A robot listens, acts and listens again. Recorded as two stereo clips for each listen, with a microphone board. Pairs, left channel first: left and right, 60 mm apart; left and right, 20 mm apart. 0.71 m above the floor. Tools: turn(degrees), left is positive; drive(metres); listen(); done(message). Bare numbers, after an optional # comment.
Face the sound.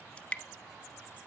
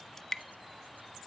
# The dripping: about 20° left or 160° left.
turn(20)
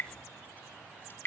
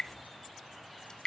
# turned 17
# So it is at 145° left.
turn(145)
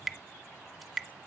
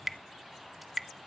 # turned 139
done("Found it: dripping, straight ahead, 1 to 2 m away.")